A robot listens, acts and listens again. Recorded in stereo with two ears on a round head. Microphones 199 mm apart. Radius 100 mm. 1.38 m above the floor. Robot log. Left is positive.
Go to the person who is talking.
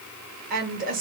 note: The woman speaking: about 40° right or 140° right.
cmd yaw -40
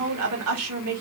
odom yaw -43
note: So it is at 95° right.
cmd yaw -95
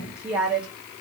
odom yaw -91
cmd fwd 1.0
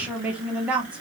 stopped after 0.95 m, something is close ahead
end: I am next to the woman speaking.